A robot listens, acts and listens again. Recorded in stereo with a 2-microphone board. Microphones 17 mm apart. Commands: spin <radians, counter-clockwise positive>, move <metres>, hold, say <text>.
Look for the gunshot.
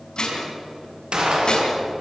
spin -1.05
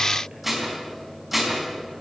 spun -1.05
hold
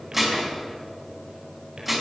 say I heard a gunshot, but can't make it out now. It was about straight ahead or 60° right.